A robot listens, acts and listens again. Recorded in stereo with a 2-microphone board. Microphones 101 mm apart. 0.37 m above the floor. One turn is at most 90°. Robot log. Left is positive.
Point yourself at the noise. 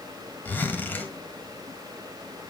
note: The zipper: about 20° left or 160° left.
cmd yaw +20
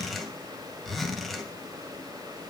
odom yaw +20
end: Found it: a zipper, straight ahead, 1 to 2 m away.